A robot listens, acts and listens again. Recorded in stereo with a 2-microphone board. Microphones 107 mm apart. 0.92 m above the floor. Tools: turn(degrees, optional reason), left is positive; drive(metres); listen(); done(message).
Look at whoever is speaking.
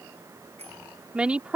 turn(degrees=-30)
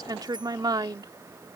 turn(degrees=-140, reason="So it is at 140° right.")
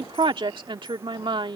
turn(degrees=-50, reason="The woman speaking is now 50° right.")
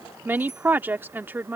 turn(degrees=-20, reason="The woman speaking is now 20° right.")
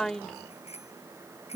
done("Facing the woman speaking.")